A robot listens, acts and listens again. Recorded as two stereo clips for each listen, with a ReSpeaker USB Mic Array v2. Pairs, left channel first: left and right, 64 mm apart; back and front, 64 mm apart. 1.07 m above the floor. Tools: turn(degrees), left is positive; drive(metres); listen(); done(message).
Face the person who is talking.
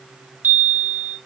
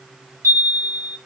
listen()
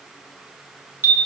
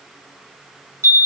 listen()
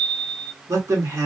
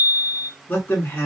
turn(degrees=-125)
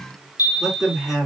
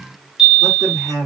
turn(degrees=-10)
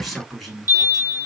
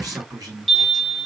done("Facing the man speaking.")